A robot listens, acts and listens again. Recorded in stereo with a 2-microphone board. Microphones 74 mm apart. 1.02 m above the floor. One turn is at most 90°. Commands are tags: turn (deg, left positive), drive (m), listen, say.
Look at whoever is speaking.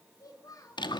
<turn deg="55"/>
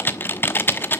<listen/>
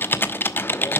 <listen/>
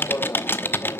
<say>I heard a child speaking, but can't make it out now. It was about straight ahead or 70° left.</say>